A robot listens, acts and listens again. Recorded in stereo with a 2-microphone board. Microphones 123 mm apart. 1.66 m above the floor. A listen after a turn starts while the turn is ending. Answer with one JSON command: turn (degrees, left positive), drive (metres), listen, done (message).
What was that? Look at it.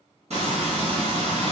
{"turn": -60}
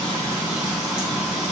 {"turn": -10}
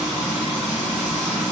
{"done": "Facing the frying."}